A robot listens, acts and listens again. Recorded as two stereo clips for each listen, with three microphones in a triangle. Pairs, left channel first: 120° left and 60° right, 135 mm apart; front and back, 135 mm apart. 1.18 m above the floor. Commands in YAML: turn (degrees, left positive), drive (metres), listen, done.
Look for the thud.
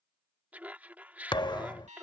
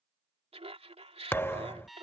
turn: 70
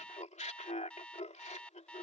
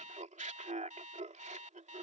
done: "Facing where the thud came from. I can't hear it now."